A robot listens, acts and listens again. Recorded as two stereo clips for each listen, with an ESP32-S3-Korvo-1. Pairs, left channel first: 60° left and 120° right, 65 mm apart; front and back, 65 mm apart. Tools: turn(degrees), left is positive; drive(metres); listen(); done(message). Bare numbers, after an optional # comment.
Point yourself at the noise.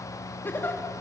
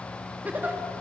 # The giggle: 115° left.
turn(115)
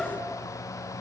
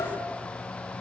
# The giggle is now 30° right.
turn(-30)
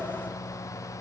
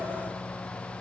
listen()
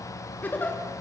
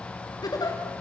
done("Facing the giggle.")